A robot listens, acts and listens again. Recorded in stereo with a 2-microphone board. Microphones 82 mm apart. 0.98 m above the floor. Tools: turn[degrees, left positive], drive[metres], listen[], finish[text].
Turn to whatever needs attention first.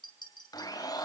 Action: listen[]
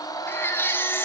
Thought: The baby crying: about 25° left or 155° left.
Action: turn[25]
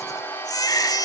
Thought: So it is at 130° left.
Action: turn[130]
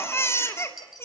Thought: The baby crying is now 30° left.
Action: turn[30]
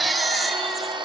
Action: finish[Facing the baby crying, 2 to 4 m away.]